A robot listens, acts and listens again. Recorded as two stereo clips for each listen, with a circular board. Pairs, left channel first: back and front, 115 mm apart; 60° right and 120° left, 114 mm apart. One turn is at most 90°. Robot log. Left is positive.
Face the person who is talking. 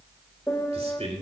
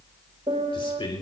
note: The man speaking: 20° right.
cmd yaw -20
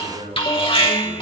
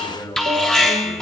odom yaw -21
end: Facing the man speaking, 2 to 4 m away.